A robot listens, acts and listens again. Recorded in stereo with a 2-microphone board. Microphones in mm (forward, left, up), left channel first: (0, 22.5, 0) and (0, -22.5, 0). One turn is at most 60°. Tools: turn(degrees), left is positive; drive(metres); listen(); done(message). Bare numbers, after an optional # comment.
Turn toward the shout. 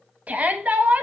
# The shout: about 40° right or 140° right.
turn(-40)
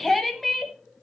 done("Found it: a shout, straight ahead.")